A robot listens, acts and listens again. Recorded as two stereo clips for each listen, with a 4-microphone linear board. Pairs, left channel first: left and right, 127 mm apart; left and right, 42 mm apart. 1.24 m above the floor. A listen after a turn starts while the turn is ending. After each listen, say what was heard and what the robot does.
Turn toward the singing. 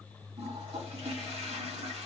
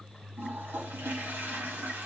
Keep listening.
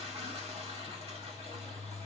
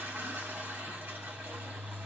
Keep listening.
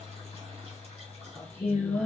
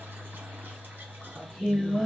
Turn 30° right.
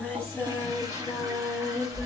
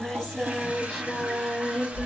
So it is at 20° left. Turn 20° left.
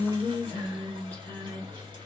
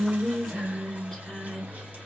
The singing is now 10° left. Turn 10° left.
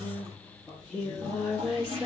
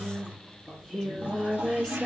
Facing the singing, over 4 m away.